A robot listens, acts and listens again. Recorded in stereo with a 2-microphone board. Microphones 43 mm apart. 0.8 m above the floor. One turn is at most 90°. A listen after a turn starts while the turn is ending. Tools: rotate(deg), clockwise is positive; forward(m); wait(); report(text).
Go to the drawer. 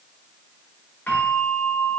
wait()
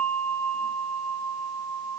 wait()
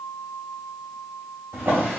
rotate(70)
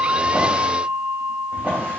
rotate(40)
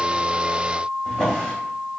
rotate(-10)
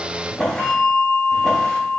forward(1.0)
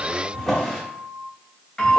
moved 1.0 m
forward(1.0)
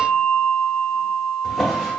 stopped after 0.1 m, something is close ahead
report("Arrived at the drawer, straight ahead.")